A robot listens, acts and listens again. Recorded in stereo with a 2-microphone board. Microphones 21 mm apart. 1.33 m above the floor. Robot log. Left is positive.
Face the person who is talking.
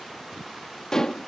cmd idle
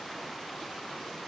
cmd idle
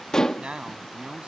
note: The man speaking: about 65° right or 115° right.
cmd yaw -65
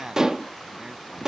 note: So it is at 45° right.
cmd yaw -45
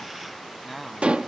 end: Facing the man speaking.